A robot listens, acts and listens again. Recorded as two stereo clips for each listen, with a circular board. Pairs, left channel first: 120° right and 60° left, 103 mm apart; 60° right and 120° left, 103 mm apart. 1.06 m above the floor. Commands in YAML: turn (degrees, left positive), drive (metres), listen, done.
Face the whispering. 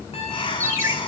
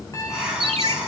turn: -155
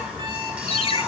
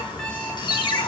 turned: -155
listen: true
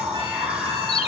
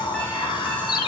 turn: -20
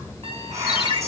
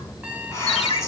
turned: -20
done: "Facing the whispering."